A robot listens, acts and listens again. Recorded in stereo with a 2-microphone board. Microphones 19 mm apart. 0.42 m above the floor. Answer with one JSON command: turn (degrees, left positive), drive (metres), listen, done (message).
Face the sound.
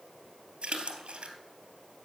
{"turn": -70}
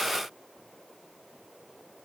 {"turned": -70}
{"listen": true}
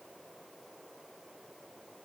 {"done": "I heard a splash, but can't make it out now. It was about straight ahead or 40° right."}